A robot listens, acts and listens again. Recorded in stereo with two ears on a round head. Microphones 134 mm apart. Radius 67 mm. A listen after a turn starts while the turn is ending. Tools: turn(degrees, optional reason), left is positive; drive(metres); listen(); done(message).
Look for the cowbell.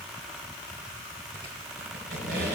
listen()
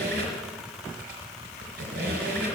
listen()
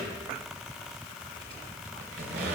done("I can't make out a cowbell, only a squeak.")